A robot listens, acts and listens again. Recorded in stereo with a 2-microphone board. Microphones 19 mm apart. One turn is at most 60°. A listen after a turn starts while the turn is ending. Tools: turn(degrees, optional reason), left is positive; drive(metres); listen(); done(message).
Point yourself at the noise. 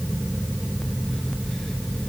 listen()
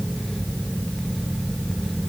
listen()
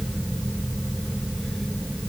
done("I can't make out anything.")